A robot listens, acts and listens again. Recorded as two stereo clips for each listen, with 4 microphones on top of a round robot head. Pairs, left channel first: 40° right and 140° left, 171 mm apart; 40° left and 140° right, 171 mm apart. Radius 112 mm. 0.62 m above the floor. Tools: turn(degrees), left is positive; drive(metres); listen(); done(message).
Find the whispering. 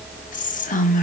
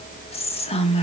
turn(degrees=-10)
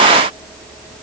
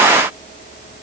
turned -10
listen()
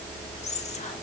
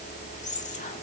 listen()
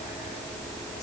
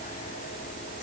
done("Facing where the whispering came from. I can't hear it now.")